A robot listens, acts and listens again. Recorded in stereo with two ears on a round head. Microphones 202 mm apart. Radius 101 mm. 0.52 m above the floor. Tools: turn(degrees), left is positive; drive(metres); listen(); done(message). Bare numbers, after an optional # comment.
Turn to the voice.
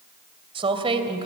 # The woman speaking: about 25° right or 155° right.
turn(-25)
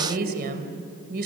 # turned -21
# So it is at 130° right.
turn(-130)
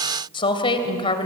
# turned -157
# The woman speaking is now 25° left.
turn(25)
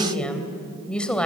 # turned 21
done("Found it: a woman speaking, straight ahead.")